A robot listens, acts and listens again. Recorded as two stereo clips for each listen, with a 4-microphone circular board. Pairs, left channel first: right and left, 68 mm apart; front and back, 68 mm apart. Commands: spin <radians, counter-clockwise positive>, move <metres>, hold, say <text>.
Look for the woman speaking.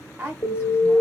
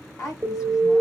spin 0.44
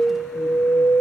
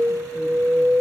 hold
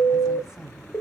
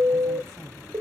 hold
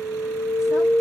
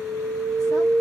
say I heard a woman speaking from this way, but can't make it out now.